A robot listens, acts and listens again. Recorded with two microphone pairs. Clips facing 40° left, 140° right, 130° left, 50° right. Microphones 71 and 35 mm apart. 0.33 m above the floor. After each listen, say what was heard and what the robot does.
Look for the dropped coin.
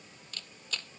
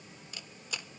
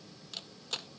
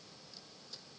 Keep listening.
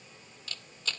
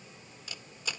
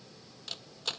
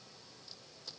Keep listening.
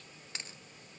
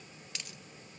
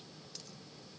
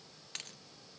The dropped coin: 20° right. Turn 20° right.
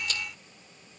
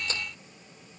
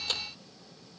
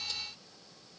I heard a dropped coin from this way, but can't make it out now.